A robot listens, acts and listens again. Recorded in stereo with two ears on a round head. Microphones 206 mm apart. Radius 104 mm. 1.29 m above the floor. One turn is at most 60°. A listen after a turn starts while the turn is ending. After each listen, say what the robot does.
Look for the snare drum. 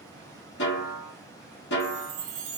Turn 50° left.
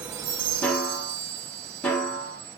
Turn 10° left.
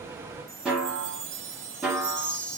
Facing the snare drum.